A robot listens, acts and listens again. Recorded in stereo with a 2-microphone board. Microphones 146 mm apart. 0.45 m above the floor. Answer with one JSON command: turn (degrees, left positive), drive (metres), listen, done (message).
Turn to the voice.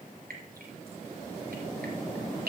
{"listen": true}
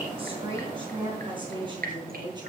{"turn": -30}
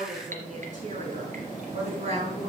{"turn": -130}
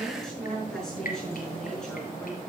{"done": "Facing the woman speaking."}